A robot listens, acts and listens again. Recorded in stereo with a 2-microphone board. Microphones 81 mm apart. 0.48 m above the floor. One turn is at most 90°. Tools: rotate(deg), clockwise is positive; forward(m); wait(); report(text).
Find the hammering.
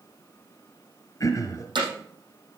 rotate(75)
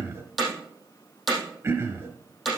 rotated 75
report("Facing the hammering, over 4 m away.")